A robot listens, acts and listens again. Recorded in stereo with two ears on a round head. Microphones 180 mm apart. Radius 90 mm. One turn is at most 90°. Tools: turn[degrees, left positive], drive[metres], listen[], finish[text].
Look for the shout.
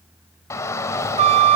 Action: turn[30]
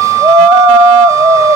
Thought: So it is at 15° right.
Action: turn[-15]
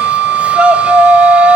Action: finish[Facing the shout.]